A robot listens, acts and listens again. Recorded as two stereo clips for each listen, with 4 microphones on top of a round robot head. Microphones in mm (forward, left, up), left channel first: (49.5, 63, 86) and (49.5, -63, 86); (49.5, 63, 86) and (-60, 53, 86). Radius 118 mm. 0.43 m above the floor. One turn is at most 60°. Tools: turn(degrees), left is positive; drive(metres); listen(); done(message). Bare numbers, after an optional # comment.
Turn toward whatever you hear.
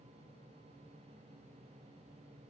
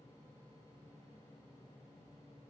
listen()
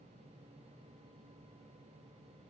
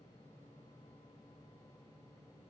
listen()
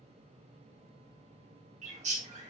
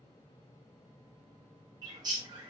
# The bird: 120° right.
turn(-60)
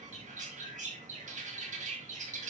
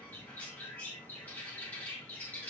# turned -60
# The bird is now 70° right.
turn(-60)
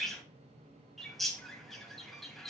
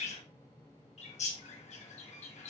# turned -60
done("Found it: a bird, straight ahead, 2 to 4 m away.")